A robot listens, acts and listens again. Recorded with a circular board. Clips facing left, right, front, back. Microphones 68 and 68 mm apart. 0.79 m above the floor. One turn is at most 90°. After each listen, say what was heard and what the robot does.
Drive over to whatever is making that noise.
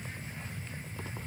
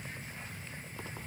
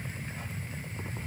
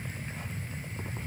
Keep listening.
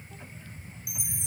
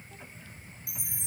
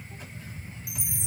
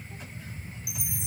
The chime: 100° left. Turn 90° left.
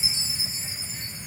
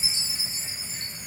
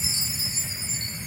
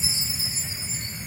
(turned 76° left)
The chime is now 20° left. Turn 20° left.
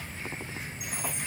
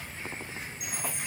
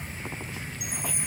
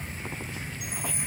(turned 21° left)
Drive 1.0 m forward.
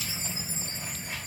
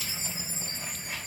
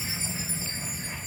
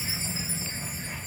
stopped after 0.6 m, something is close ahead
Keep listening.
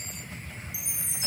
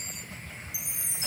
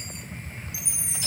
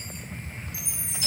Something is in my way. I am facing the chime but have not reached it.